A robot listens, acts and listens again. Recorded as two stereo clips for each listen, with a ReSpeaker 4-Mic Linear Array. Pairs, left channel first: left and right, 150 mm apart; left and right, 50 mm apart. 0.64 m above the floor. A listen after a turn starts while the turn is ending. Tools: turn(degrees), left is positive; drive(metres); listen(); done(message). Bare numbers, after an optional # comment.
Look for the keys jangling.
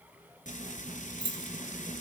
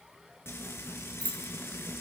# The keys jangling: about 30° left or 150° left.
turn(30)
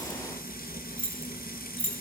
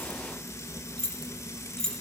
# So it is at 10° left.
turn(10)
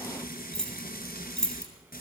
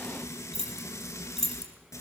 done("Found it: keys jangling, straight ahead.")